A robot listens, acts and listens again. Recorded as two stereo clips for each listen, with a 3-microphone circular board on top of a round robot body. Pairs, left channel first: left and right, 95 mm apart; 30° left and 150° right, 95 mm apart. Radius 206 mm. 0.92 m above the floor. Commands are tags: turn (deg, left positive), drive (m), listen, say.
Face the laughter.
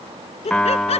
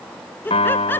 <turn deg="100"/>
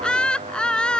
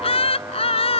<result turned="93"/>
<turn deg="10"/>
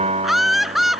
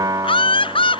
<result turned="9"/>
<say>Facing the laughter.</say>